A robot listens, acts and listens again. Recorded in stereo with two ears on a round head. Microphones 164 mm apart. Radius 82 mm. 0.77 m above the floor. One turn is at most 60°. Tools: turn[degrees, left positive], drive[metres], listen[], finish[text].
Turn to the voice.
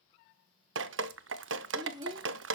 Thought: The child speaking: about 25° right or 155° right.
Action: turn[-25]
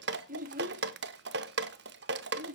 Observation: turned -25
Thought: So it is at 125° right.
Action: turn[-60]
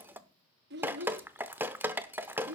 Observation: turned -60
Thought: The child speaking is now 70° right.
Action: turn[-60]
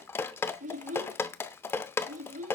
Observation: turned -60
Thought: The child speaking is now 45° right.
Action: turn[-45]
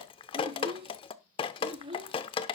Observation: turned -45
Thought: The child speaking is now 30° right.
Action: turn[-30]
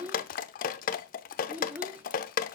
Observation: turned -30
Thought: The child speaking is now 10° right.
Action: turn[-10]
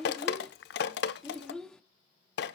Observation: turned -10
Action: finish[Facing the child speaking.]